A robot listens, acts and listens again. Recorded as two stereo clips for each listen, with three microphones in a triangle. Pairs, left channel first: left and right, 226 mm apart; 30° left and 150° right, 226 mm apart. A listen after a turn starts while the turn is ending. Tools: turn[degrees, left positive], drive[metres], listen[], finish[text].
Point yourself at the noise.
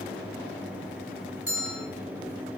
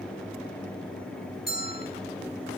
Thought: The bell: 75° left.
Action: turn[75]
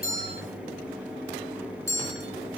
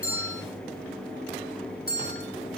Thought: The bell is now 10° left.
Action: turn[10]
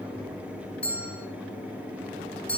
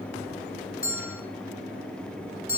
Action: finish[Facing the bell.]